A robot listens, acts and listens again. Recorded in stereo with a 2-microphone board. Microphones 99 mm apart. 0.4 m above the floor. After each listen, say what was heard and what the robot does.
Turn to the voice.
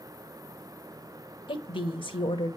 The woman speaking: about 55° left or 125° left. Turn 55° left.
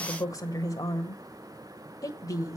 So it is at 45° left. Turn 45° left.
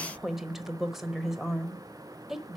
Found it: a woman speaking, straight ahead.